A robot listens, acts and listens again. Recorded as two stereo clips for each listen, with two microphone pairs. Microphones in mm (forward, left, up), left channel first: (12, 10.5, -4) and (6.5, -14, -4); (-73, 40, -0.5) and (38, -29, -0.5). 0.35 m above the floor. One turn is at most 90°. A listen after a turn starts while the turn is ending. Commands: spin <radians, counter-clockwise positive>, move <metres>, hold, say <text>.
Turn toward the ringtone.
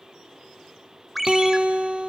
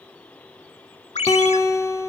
spin 1.57
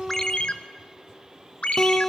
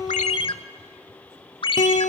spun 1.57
spin 1.57
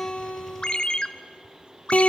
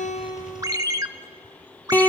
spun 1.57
spin 0.52
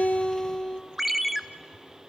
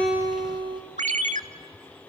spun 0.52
spin -0.35
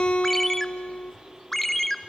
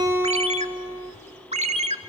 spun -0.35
say Found it: a ringtone, straight ahead, under 1 m away.